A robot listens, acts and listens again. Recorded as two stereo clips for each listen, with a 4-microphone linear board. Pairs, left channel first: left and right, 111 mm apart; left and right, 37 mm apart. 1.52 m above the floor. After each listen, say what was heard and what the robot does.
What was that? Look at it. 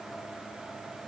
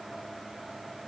Keep listening.
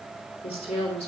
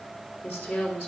Turn 90° left.
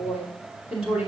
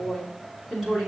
So it is at 15° right. Turn 15° right.
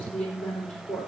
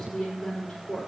Facing the woman speaking, 2 to 4 m away.